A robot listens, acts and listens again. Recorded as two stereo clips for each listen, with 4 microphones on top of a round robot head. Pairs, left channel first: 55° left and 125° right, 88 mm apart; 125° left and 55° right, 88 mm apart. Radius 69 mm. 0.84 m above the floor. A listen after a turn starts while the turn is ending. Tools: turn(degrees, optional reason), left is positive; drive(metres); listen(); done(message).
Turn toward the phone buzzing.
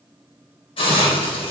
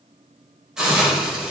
listen()
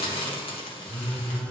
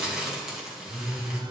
turn(degrees=-25, reason="The phone buzzing: 25° right.")
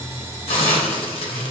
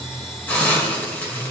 done("Found it: a phone buzzing, straight ahead.")